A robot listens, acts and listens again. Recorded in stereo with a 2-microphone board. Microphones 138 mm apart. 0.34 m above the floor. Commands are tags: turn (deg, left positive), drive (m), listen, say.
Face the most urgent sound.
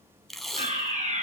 <turn deg="-60"/>
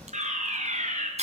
<turn deg="-55"/>
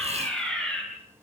<say>Found it: a fire alarm, straight ahead.</say>